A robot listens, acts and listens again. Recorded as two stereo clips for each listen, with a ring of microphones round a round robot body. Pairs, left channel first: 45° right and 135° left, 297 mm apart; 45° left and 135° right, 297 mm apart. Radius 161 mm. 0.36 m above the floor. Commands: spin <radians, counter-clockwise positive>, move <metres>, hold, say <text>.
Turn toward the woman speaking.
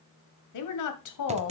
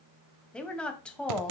spin -0.70
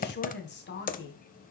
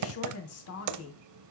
spin 0.17
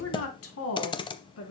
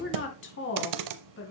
say Found it: a woman speaking, straight ahead.